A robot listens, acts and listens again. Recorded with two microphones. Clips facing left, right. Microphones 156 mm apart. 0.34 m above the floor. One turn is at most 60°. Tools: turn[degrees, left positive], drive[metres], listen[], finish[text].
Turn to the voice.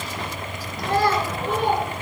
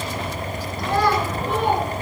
Thought: The child speaking: about 40° left or 140° left.
Action: turn[40]
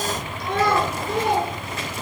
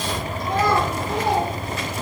Thought: So it is at 105° left.
Action: turn[60]
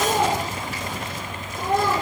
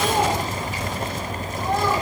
Thought: The child speaking is now 55° left.
Action: turn[55]
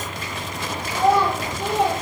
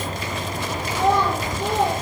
Action: finish[Found it: a child speaking, straight ahead.]